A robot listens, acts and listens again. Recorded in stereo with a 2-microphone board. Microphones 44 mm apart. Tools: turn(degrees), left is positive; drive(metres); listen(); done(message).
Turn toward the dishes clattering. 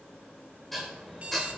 turn(degrees=30)
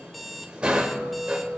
turn(degrees=-30)
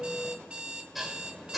done("Facing the dishes clattering, 2 to 4 m away.")